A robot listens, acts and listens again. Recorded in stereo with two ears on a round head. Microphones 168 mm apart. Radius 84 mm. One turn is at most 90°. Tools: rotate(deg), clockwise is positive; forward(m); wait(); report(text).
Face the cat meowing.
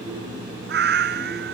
rotate(60)
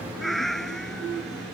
report("Facing the cat meowing.")